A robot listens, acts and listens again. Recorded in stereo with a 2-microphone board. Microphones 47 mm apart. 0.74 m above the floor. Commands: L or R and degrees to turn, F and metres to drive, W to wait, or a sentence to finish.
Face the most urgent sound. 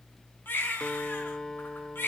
L55
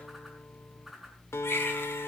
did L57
L70
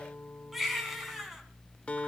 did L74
Found it: a baby crying, straight ahead, 2 to 4 m away.